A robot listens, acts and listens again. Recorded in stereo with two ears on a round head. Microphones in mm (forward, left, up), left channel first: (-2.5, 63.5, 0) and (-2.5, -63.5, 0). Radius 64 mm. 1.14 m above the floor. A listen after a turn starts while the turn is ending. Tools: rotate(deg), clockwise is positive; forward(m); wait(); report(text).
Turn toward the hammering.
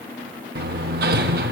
rotate(90)
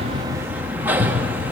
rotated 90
rotate(15)
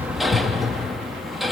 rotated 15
report("Facing the hammering, 1 to 2 m away.")